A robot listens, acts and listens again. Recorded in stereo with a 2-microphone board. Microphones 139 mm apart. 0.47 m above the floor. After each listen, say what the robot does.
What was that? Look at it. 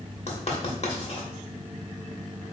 Turn 50° left.
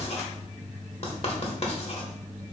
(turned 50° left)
Turn 65° left.
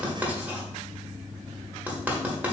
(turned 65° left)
Turn 15° right.
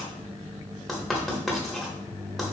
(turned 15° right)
Found it: writing, straight ahead, 1 to 2 m away.